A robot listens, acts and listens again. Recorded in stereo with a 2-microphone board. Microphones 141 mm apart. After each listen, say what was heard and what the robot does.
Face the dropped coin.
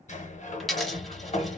Turn 30° left.
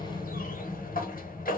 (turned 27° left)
Keep listening.
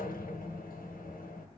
I heard a dropped coin, but can't make it out now. It was about 25° right or 155° left.